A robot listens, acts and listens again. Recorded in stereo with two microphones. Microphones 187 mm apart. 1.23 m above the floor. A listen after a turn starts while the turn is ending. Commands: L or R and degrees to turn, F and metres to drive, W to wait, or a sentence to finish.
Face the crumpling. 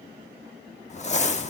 L35
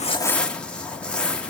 Facing the crumpling.